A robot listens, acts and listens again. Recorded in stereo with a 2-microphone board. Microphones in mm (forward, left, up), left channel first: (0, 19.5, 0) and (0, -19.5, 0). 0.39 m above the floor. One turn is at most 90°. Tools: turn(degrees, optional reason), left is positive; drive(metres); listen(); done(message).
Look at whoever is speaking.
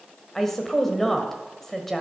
turn(degrees=30)
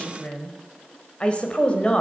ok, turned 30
turn(degrees=90, reason="So it is at 140° left.")
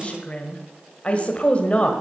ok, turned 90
turn(degrees=40, reason="The woman speaking is now 40° left.")
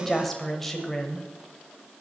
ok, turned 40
turn(degrees=10, reason="The woman speaking is now 10° left.")
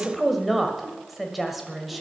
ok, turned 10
done("Found it: a woman speaking, straight ahead.")